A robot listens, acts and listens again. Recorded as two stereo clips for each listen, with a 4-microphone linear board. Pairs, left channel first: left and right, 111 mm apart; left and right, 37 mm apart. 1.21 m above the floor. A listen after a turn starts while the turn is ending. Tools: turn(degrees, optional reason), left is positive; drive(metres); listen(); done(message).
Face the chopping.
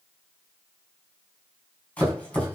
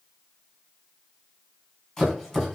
turn(degrees=30)
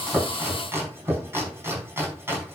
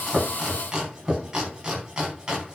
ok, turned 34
turn(degrees=-20, reason="So it is at 20° right.")
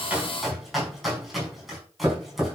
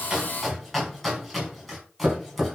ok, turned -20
done("Found it: chopping, straight ahead.")